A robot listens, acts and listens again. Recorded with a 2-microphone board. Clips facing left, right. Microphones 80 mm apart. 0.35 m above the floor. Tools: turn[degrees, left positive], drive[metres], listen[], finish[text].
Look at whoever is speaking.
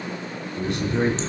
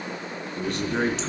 Thought: The man speaking: about 30° right or 150° right.
Action: turn[-30]
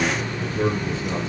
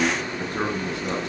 Thought: So it is at 120° right.
Action: turn[-120]
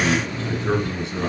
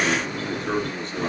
Action: finish[Found it: a man speaking, straight ahead, over 4 m away.]